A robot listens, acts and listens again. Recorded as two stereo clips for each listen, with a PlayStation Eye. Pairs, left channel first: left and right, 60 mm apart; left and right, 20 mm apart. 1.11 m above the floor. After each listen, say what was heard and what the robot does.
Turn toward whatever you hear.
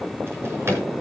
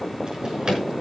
The drawer: about 45° right or 135° right. Turn 45° right.
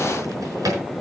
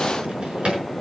So it is at 85° right. Turn 85° right.
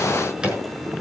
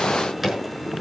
The drawer is now 15° right. Turn 15° right.
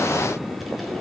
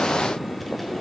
Keep listening.
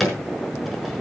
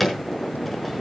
Found it: a drawer, straight ahead.